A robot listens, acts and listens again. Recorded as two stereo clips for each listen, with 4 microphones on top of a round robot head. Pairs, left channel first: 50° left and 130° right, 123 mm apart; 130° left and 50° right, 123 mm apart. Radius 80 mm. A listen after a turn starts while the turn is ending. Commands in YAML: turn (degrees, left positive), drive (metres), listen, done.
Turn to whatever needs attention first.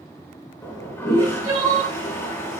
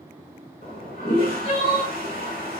turn: 170
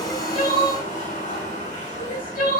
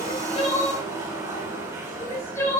turn: 65
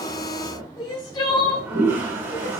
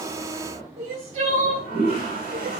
turn: -10
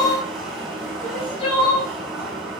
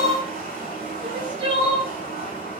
done: "Facing the crying, 2 to 4 m away."